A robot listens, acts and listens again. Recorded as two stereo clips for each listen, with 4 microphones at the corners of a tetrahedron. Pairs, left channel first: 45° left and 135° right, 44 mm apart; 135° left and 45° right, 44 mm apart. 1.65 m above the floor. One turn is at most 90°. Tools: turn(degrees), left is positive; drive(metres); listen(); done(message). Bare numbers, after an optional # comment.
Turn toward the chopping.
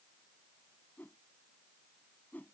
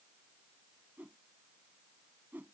listen()
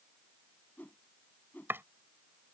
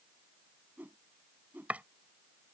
# The chopping: 100° right.
turn(-90)
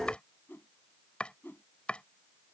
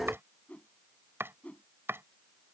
# The chopping is now 20° right.
turn(-20)
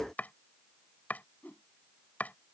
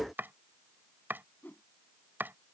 done("Facing the chopping.")